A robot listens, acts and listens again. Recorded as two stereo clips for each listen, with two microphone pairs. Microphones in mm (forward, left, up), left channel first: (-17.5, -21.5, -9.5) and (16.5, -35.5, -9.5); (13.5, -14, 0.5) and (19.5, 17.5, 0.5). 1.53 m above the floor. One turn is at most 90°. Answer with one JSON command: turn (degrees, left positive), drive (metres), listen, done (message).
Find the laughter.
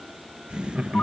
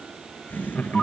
{"turn": -80}
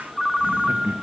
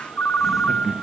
{"done": "Found it: laughter, straight ahead, 2 to 4 m away."}